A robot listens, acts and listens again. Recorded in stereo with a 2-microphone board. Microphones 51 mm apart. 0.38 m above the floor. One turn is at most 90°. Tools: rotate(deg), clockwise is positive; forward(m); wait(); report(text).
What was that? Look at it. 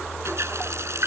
rotate(65)
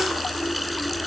report("Found it: a running tap, straight ahead.")